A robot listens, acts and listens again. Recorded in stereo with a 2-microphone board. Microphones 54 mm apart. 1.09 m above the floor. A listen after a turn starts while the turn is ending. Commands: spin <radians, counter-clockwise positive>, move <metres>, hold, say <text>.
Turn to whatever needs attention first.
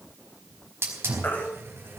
spin 0.61
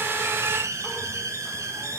hold
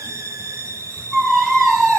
say Facing the baby crying, 2 to 4 m away.